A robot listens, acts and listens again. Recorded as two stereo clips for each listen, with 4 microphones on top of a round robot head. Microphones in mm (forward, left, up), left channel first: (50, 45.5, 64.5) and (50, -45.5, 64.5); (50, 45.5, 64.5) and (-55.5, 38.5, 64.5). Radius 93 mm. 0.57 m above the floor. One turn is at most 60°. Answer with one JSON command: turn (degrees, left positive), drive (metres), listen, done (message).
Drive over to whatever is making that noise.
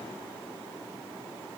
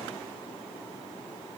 {"listen": true}
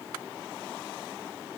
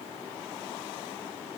{"listen": true}
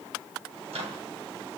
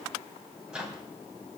{"turn": -60}
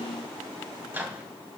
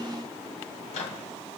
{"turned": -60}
{"turn": -20}
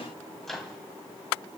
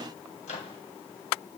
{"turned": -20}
{"drive": 1.0}
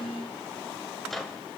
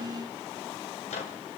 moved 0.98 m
{"drive": 1.0}
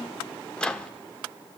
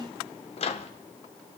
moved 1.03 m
{"turn": 10}
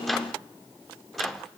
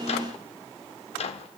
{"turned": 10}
{"drive": 1.0}
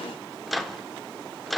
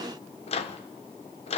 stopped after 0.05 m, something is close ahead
{"done": "I am next to the microwave."}